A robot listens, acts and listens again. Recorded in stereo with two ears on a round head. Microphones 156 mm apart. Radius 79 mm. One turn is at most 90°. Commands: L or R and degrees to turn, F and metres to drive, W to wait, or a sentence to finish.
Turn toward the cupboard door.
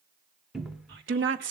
R30
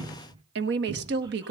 R90
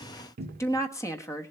R60
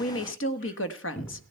L10
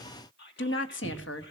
Found it: a cupboard door, straight ahead.